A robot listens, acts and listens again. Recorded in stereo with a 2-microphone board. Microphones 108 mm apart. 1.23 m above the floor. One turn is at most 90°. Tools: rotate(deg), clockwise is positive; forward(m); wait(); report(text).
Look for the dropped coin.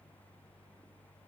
wait()
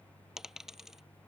rotate(30)
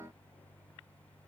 wait()
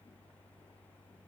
report("I heard a dropped coin, but can't make it out now. It was about 25° left or 145° right.")